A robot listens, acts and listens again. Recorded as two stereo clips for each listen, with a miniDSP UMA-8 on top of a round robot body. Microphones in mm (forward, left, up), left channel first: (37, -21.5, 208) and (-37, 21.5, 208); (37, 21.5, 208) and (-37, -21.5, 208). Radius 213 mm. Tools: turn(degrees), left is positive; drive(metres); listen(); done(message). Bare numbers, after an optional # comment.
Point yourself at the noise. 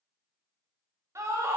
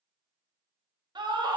# The scream: 160° right.
turn(-160)
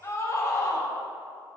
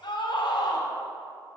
# The scream is now 20° left.
turn(20)
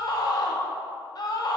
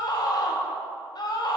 done("Facing the scream, 1 to 2 m away.")